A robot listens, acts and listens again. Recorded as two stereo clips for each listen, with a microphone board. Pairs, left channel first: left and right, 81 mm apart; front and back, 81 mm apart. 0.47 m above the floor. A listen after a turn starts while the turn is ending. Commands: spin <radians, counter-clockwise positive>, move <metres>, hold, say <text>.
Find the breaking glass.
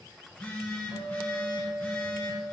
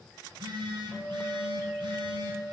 hold
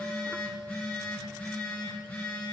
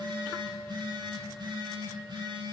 hold
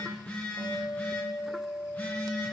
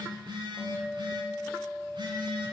say I can't make out breaking glass to turn to.